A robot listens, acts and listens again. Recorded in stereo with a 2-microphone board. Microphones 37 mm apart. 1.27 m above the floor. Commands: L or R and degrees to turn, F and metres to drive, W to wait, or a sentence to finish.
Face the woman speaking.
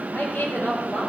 L60
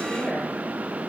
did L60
L55
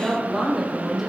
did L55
Facing the woman speaking, over 4 m away.